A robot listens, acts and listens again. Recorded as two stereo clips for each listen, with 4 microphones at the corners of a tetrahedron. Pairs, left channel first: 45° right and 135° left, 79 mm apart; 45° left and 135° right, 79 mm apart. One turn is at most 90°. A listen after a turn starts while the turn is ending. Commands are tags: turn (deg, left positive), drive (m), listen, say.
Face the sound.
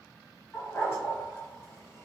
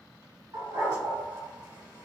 <turn deg="-90"/>
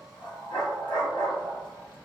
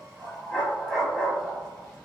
<turn deg="-40"/>
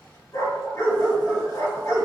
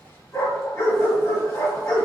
<say>Found it: a dog barking, straight ahead, 1 to 2 m away.</say>